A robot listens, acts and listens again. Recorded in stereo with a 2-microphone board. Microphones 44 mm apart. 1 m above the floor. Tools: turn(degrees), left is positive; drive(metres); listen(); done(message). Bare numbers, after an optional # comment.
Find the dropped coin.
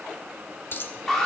# The dropped coin: about 55° left or 125° left.
turn(55)
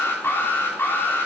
listen()
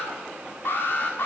done("I heard a dropped coin, but can't make it out now. It was about straight ahead or 70° left.")